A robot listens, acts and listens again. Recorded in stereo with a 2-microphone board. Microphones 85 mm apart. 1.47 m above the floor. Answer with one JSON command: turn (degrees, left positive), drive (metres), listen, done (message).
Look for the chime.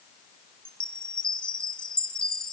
{"turn": 30}
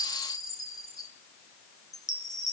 {"turn": 145}
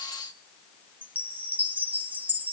{"turn": -15}
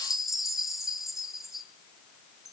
{"done": "Found it: a chime, straight ahead, 1 to 2 m away."}